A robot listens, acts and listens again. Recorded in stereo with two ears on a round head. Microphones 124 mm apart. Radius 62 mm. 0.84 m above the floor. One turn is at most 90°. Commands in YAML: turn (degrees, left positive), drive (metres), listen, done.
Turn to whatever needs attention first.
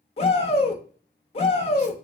turn: 45
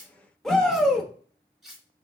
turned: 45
done: "Found it: a shout, straight ahead, under 1 m away."